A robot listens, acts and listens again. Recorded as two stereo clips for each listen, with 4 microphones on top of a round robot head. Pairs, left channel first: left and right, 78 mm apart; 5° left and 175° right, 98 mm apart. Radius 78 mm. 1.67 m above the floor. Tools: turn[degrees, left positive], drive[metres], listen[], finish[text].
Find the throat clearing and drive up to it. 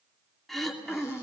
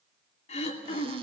Action: drive[1.0]
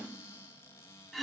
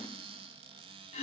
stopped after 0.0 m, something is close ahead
Action: finish[Blocked. The throat clearing is further on, straight ahead.]